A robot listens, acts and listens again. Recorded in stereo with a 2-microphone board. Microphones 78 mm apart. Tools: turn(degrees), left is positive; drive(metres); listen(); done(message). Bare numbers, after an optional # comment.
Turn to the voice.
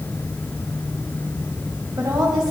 # The woman speaking: about 45° right or 135° right.
turn(-45)
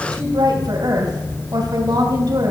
# So it is at 75° right.
turn(-75)
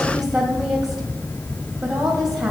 done("Found it: a woman speaking, straight ahead.")